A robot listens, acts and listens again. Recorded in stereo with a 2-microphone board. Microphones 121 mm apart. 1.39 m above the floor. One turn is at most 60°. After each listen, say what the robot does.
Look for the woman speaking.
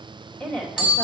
Turn 30° left.
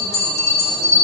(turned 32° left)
Keep listening.
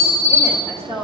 Turn 60° left.
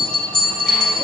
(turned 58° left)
Turn 60° left.
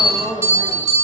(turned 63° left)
Turn 15° left.
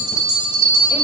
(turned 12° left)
Keep listening.
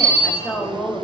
Facing the woman speaking, 2 to 4 m away.